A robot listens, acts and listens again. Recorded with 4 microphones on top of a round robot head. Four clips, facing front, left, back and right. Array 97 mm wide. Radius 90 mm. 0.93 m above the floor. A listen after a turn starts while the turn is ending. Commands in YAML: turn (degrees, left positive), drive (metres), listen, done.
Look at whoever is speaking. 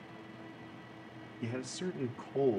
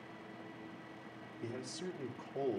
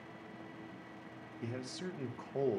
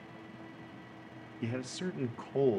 turn: -95
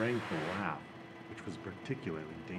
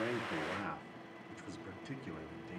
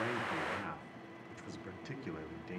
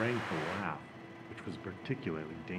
turn: -75
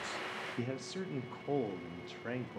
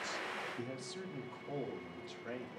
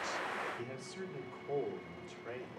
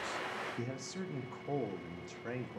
turn: -30
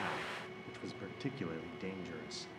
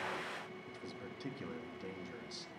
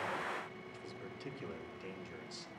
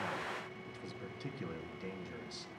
done: "Found it: a man speaking, straight ahead."